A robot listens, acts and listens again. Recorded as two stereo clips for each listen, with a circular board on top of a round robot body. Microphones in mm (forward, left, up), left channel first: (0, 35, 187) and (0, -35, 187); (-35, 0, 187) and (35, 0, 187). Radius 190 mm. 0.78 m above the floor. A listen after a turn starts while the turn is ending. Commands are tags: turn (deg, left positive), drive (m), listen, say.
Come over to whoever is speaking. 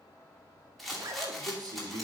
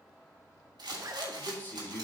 <turn deg="-115"/>
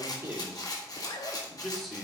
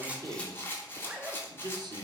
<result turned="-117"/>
<drive m="1.0"/>
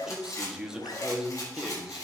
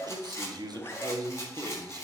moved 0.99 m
<turn deg="-10"/>
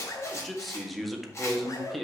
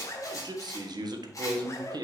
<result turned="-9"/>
<drive m="1.0"/>
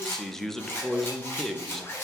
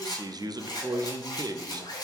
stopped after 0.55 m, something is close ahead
<say>Arrived at the man speaking, straight ahead.</say>